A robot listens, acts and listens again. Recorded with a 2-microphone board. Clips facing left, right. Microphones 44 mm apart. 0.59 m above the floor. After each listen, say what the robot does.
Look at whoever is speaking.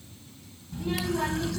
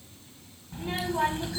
Turn 30° right.
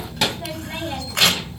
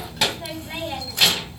Facing the child speaking.